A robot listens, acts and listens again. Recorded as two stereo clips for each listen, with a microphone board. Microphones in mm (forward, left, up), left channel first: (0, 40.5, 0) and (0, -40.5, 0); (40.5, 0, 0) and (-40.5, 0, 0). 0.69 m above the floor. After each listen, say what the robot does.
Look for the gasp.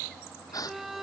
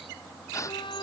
Turn 50° left.
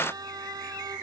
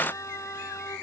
Facing where the gasp came from. I can't hear it now.